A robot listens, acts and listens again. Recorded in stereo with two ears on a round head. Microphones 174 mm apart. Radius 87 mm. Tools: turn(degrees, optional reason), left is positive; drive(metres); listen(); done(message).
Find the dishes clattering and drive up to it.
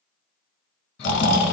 listen()
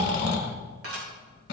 turn(degrees=-90)
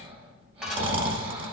drive(metres=1.0)
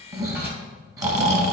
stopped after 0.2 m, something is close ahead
listen()
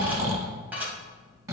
turn(degrees=-10, reason="The dishes clattering is now 10° right.")
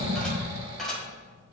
done("Something is in my way. I am facing the dishes clattering but have not reached it.")